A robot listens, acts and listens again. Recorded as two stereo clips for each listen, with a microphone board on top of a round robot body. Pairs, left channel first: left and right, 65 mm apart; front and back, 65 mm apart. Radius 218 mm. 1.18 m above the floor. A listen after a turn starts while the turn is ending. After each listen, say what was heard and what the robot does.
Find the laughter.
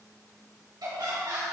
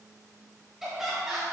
The laughter: 100° right. Turn 100° right.
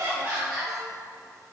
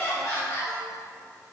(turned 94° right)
The laughter is now 10° right. Turn 10° right.
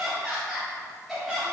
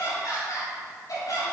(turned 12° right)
Facing the laughter, 2 to 4 m away.